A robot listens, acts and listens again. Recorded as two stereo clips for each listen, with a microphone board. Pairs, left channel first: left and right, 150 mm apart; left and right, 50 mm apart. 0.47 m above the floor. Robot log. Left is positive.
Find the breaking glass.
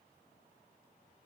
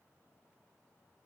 cmd idle
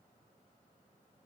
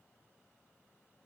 cmd idle
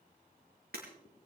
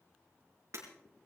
cmd yaw -90
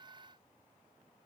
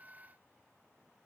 end: Facing where the breaking glass came from. I can't hear it now.